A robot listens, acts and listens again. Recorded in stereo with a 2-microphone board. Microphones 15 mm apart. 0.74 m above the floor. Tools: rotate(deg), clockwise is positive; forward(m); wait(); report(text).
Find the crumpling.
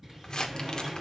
rotate(-50)
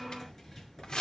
rotate(-75)
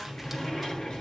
wait()
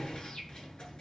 wait()
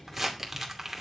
rotate(10)
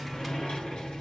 wait()
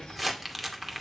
report("Found it: crumpling, straight ahead.")